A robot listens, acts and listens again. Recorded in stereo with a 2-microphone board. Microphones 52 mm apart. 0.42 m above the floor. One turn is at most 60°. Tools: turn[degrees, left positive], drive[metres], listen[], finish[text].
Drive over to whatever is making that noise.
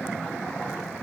Action: listen[]
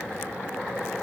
Action: listen[]
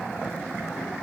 Action: finish[I can't make out anything.]